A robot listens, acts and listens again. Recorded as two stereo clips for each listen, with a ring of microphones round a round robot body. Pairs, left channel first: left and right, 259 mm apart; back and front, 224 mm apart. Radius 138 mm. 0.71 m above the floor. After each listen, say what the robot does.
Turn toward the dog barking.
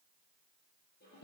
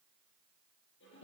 Keep listening.
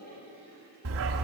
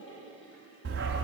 Turn 50° right.
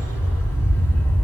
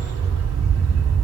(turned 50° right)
Turn 10° left.
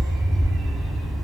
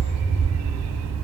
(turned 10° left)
Facing the dog barking, 1 to 2 m away.